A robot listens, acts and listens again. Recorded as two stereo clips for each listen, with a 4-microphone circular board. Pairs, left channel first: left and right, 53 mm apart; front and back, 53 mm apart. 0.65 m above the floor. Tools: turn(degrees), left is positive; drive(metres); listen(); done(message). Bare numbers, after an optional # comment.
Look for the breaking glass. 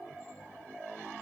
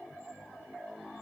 listen()
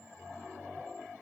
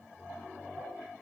listen()
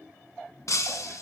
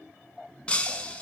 # The breaking glass: 70° left.
turn(70)
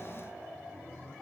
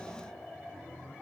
done("Facing where the breaking glass came from. I can't hear it now.")